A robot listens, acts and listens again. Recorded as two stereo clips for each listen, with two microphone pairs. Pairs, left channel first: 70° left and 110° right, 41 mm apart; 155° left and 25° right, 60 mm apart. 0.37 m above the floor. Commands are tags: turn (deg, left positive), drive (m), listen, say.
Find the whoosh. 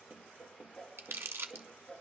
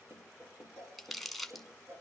<turn deg="-10"/>
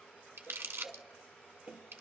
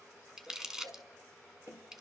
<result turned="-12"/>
<say>Facing the whoosh.</say>